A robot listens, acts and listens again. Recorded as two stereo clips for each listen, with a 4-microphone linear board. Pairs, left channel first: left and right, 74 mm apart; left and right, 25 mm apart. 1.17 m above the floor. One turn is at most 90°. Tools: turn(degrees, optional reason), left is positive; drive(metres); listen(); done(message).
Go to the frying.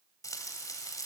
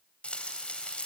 turn(degrees=50, reason="The frying: about 50° left or 130° left.")
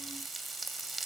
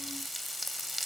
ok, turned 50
drive(metres=1.0)
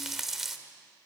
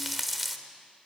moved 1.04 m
drive(metres=1.0)
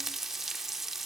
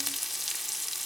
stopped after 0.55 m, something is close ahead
done("I am next to the frying.")